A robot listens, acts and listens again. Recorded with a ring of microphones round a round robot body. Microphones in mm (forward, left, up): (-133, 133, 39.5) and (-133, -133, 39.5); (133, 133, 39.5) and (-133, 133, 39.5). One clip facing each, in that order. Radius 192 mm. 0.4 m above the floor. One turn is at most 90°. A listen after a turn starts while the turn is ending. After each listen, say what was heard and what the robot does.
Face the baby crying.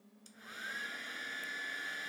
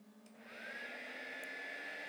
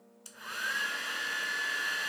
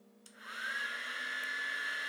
Keep listening.
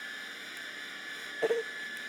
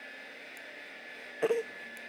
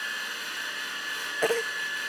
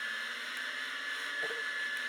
Facing the baby crying.